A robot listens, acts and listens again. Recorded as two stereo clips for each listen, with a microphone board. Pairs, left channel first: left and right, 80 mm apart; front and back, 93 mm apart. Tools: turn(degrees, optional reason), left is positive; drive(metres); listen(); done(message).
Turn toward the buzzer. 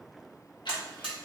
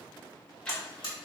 turn(degrees=-15, reason="The buzzer: 15° right.")
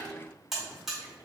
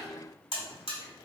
done("Facing the buzzer.")